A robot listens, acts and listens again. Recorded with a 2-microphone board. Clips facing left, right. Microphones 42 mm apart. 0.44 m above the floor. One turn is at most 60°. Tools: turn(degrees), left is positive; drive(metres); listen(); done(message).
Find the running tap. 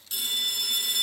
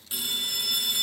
listen()
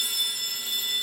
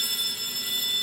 listen()
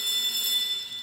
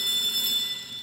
done("I can't make out a running tap to turn to.")